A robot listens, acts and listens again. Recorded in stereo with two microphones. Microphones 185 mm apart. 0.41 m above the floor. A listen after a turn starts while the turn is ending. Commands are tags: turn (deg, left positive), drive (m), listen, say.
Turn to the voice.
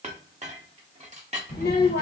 <turn deg="60"/>
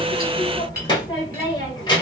<turn deg="30"/>
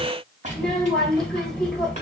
<say>Found it: a child speaking, straight ahead, 1 to 2 m away.</say>